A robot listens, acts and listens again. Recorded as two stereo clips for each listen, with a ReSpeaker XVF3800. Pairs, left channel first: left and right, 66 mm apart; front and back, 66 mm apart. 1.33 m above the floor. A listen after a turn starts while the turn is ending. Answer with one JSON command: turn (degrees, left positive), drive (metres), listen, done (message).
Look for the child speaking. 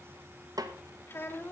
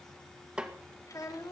{"turn": 35}
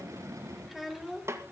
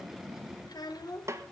{"done": "Facing the child speaking."}